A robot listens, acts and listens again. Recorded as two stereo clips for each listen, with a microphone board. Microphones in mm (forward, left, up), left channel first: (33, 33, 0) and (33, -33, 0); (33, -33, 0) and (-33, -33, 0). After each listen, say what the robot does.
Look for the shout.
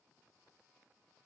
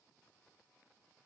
Keep listening.
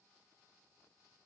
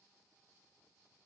Keep listening.
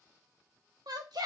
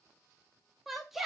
Turn 95° right.
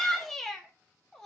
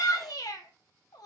Found it: a shout, straight ahead, 1 to 2 m away.